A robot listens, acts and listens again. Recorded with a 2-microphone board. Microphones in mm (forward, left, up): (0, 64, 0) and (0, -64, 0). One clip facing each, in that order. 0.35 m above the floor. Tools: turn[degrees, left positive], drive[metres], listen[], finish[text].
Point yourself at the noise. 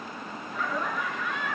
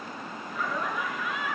Action: turn[-30]
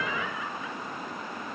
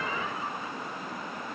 Action: listen[]
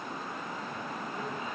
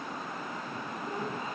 Action: listen[]
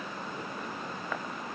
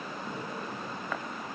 Action: finish[I heard laughter, but can't make it out now. It was about 25° left or 145° right.]